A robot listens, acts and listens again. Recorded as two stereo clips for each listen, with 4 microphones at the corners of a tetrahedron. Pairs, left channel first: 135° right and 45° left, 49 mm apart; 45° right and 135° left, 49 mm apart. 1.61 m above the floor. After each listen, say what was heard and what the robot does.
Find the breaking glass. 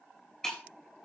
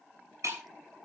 The breaking glass: 145° left. Turn 145° left.
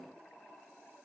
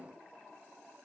I heard breaking glass from this way, but can't make it out now.